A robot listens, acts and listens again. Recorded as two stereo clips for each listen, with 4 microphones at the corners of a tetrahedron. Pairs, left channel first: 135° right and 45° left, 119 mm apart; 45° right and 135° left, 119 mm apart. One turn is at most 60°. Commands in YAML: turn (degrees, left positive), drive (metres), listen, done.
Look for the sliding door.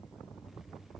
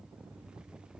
listen: true
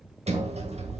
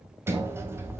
turn: 60
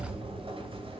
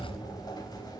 turn: 10
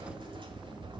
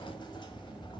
done: "Facing the sliding door."